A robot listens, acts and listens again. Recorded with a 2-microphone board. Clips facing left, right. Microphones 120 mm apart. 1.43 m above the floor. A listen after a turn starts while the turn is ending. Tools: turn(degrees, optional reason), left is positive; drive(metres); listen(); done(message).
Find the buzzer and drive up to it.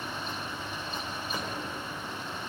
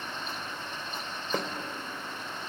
listen()
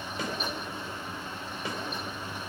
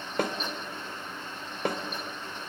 listen()
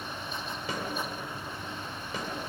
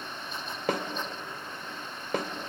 done("I can't make out a buzzer to turn to.")